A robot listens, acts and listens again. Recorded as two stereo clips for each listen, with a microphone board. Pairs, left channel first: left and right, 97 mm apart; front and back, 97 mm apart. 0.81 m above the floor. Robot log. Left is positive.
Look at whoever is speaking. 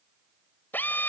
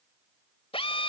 cmd idle
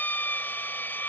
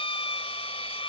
cmd idle
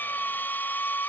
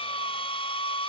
end: I can't make out anyone speaking to turn to.